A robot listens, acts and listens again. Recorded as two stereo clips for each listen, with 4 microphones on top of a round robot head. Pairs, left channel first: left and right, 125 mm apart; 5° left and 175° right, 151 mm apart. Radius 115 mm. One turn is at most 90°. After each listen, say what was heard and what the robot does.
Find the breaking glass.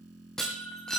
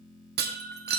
The breaking glass: 175° left. Turn 90° left.
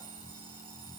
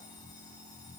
Nothing new. It was at 85° left. Turn 85° left.
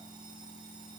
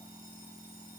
I heard breaking glass from this way, but can't make it out now.